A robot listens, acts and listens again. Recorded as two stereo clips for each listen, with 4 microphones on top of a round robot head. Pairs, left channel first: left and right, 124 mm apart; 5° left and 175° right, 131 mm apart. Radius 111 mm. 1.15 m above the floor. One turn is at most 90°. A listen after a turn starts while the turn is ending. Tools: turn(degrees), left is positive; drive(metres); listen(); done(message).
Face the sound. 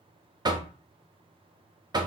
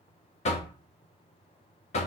turn(degrees=-35)
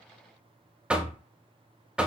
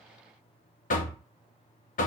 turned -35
turn(degrees=-10)
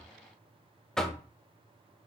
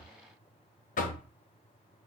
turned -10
done("Found it: knocking, straight ahead.")